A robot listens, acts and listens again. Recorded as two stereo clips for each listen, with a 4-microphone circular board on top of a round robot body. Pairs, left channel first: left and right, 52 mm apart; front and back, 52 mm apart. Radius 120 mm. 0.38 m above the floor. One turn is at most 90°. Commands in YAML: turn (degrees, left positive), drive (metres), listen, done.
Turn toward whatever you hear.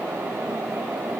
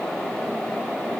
listen: true
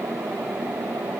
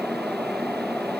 listen: true
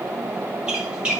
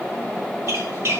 turn: -90
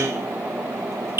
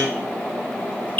turn: -60
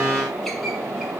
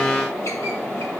listen: true
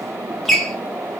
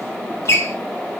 done: "Facing the squeak, 2 to 4 m away."